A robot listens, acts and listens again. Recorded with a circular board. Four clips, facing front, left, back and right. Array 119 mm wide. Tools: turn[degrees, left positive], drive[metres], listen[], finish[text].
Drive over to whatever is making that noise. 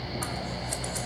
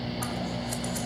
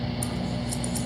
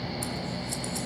Thought: The scissors: 25° left.
Action: turn[25]
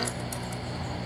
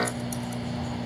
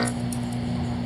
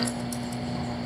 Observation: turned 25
Action: drive[1.0]
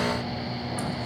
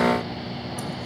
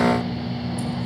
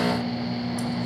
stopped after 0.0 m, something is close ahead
Action: listen[]
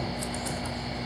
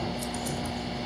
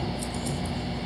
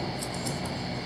Thought: The scissors is now 10° right.
Action: turn[-10]
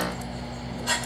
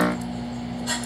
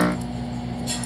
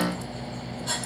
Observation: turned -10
Action: finish[Blocked. The scissors is further on, straight ahead.]